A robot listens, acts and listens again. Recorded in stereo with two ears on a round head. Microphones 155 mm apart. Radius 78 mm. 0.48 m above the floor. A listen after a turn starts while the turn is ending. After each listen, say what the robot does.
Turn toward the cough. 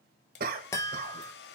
Turn 55° right.
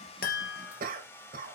Turn 60° right.
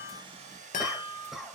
Facing the cough.